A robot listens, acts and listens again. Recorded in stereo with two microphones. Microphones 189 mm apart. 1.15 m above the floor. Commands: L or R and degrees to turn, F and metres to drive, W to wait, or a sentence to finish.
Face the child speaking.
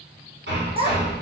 R30
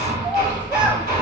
Found it: a child speaking, straight ahead, under 1 m away.